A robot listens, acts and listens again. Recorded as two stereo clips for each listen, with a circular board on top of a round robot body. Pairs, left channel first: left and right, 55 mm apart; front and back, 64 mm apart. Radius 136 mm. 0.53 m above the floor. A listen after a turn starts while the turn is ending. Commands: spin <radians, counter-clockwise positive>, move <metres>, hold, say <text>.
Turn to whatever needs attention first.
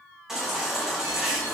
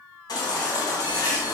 spin -0.17
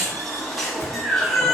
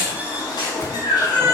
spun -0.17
say Facing the baby crying, 2 to 4 m away.